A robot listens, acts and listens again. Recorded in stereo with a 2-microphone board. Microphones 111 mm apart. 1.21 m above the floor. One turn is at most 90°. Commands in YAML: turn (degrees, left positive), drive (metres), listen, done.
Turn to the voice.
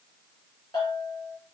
listen: true
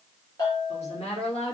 turn: 70
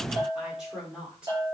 done: "Found it: a woman speaking, straight ahead, over 4 m away."